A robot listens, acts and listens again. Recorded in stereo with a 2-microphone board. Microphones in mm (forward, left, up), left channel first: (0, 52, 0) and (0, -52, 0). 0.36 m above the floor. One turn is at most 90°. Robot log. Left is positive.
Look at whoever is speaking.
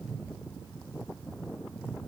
cmd idle
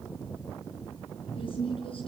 note: The woman speaking: about 70° left or 110° left.
cmd yaw +70
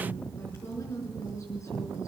note: So it is at 35° left.
cmd yaw +35
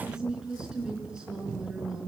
note: The woman speaking is now 10° right.
cmd yaw -10
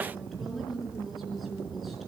end: Found it: a woman speaking, straight ahead, over 4 m away.